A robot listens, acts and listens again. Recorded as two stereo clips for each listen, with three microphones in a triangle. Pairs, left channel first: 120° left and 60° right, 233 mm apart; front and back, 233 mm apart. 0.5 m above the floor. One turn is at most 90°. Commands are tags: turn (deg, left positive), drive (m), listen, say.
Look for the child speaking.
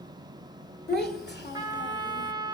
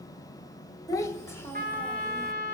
<turn deg="80"/>
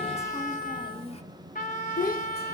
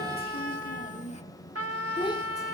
<turn deg="70"/>
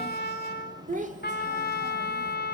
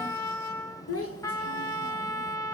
<say>Facing the child speaking.</say>